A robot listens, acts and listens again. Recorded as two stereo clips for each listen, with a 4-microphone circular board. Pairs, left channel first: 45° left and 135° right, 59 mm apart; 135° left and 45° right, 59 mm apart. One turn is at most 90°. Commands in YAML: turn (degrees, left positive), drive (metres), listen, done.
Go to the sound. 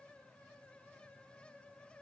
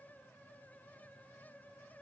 listen: true
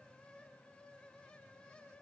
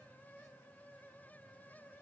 listen: true
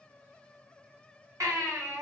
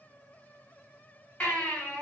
turn: -90
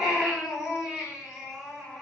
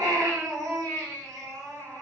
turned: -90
turn: -55
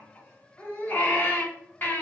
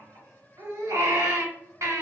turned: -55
turn: -15
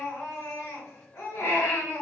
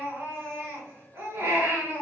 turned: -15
drive: 1.0
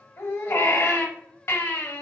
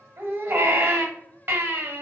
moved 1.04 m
drive: 1.0
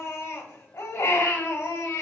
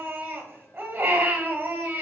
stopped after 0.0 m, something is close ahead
done: "I am next to the baby crying."